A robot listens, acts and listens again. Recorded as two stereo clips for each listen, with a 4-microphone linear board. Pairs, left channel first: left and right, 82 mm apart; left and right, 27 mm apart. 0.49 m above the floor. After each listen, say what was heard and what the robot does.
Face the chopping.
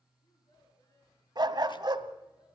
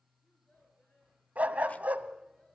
Keep listening.
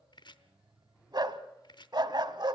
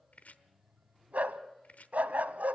The chopping: about 60° left or 120° left. Turn 60° left.
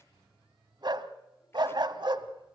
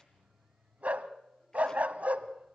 Keep listening.
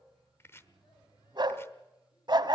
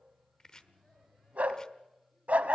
So it is at 30° left. Turn 30° left.
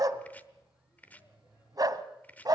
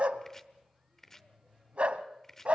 The chopping is now 20° left. Turn 20° left.
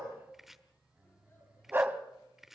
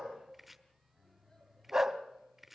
Facing the chopping.